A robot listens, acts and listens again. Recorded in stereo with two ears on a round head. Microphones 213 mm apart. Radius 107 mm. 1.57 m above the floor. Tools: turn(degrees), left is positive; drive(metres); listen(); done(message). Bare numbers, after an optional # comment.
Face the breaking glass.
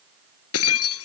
# The breaking glass: about 70° left or 110° left.
turn(70)
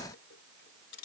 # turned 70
listen()
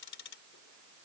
done("I heard breaking glass, but can't make it out now. It was about straight ahead or 40° left.")